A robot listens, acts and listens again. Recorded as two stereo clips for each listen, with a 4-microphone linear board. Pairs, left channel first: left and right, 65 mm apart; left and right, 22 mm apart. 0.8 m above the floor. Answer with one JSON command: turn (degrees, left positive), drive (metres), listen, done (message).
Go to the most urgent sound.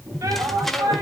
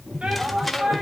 {"turn": -90}
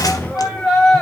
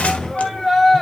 {"drive": 1.0}
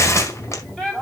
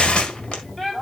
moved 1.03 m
{"turn": 10}
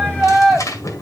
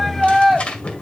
{"drive": 1.0}
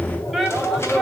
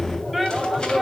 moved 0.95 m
{"drive": 1.0}
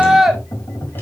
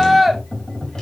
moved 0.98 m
{"drive": 1.0}
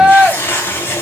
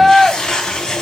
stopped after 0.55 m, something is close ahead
{"turn": -15}
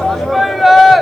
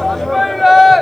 {"done": "I am next to the shout."}